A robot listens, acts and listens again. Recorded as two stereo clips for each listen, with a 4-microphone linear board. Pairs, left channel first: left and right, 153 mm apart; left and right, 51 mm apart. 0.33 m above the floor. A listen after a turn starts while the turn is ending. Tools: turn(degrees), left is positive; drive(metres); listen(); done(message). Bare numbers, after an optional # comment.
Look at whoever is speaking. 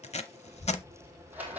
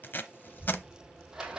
# The child speaking: about 55° left or 125° left.
turn(55)
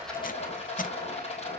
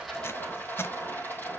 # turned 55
listen()
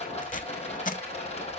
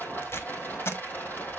listen()
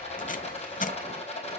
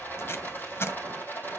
done("I heard a child speaking, but can't make it out now. It was about straight ahead or 70° left.")